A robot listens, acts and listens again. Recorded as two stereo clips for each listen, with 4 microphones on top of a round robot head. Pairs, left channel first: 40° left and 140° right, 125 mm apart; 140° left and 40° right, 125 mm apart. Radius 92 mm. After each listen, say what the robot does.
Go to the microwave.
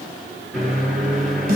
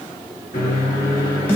Turn 135° left.
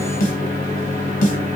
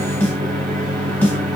Turn 20° right.
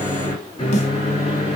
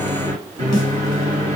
Drive 1.0 m forward.
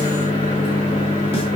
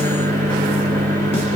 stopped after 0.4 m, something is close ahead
Turn 10° right.
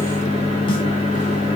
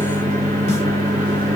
Something is in my way. I am facing the microwave but have not reached it.